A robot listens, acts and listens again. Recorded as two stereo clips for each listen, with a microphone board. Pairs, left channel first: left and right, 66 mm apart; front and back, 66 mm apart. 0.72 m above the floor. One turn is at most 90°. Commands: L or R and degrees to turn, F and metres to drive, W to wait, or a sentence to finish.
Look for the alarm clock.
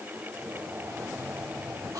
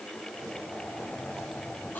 W
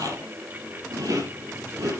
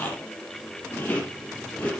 W
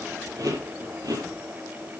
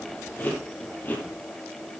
I can't make out an alarm clock, only chewing.